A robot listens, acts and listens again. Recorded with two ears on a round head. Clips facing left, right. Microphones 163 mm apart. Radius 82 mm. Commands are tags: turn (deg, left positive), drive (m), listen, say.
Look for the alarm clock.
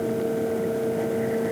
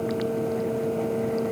<listen/>
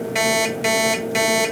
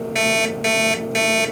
<turn deg="30"/>
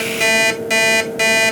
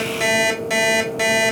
<turn deg="150"/>
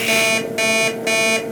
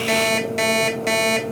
<say>Facing the alarm clock, 1 to 2 m away.</say>